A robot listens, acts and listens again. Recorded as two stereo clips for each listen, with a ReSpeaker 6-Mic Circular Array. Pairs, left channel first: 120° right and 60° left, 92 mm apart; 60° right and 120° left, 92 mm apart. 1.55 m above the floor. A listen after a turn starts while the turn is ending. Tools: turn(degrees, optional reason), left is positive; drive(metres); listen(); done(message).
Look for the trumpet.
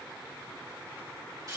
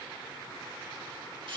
listen()
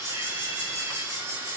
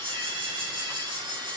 listen()
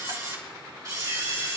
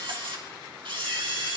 done("I can't make out a trumpet, only a camera shutter.")